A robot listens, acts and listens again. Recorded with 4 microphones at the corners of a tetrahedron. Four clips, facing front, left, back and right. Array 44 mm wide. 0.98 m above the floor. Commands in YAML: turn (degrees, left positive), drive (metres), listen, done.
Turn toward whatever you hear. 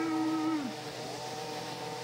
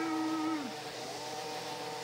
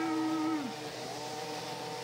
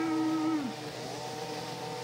listen: true
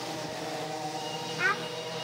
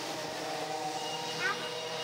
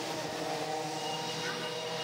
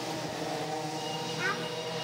done: "Found it: a child speaking, straight ahead, 1 to 2 m away."